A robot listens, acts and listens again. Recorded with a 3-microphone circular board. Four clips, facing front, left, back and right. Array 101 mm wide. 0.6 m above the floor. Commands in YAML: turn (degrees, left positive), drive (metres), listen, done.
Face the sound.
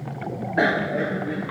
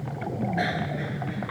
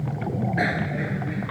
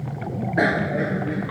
turn: -40
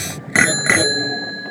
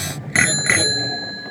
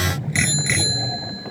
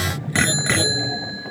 done: "Found it: a bicycle bell, straight ahead."